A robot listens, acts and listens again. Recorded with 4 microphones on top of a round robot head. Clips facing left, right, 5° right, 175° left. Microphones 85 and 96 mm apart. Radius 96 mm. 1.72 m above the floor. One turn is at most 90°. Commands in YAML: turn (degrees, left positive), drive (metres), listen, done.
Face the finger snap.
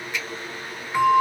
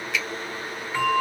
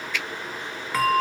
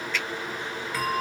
turn: -90
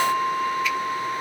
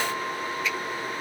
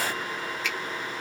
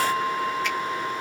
listen: true
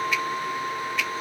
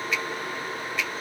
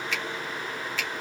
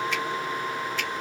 done: "Found it: a finger snap, straight ahead, 1 to 2 m away."